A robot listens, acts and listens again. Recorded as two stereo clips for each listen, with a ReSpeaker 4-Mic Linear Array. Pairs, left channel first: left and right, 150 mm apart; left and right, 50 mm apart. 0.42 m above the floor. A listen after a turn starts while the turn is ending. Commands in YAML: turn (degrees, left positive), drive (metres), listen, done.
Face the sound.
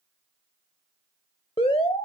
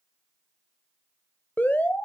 turn: 40
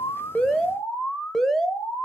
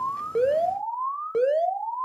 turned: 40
done: "Facing the alarm, under 1 m away."